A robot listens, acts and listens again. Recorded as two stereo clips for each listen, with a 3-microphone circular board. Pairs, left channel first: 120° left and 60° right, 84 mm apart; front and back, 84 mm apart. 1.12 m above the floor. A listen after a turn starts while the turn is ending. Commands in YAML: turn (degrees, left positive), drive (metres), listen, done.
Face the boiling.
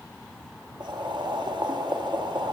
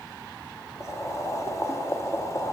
turn: -50
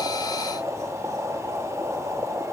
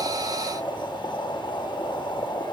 turn: -10
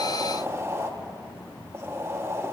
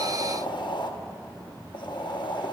done: "Facing the boiling, under 1 m away."